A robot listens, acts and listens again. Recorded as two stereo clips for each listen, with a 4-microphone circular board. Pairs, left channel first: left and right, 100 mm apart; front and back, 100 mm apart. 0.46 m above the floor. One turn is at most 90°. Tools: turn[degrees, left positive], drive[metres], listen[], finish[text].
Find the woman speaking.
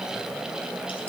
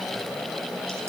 Action: listen[]
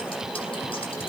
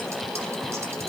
Action: listen[]
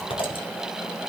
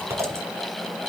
Action: finish[I can't make out a woman speaking, only scissors.]